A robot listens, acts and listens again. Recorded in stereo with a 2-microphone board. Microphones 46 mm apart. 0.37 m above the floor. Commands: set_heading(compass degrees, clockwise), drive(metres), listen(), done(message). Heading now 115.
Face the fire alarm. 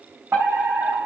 set_heading(180)
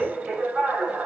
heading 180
set_heading(205)
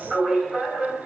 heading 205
done("Found it: a fire alarm, straight ahead, over 4 m away.")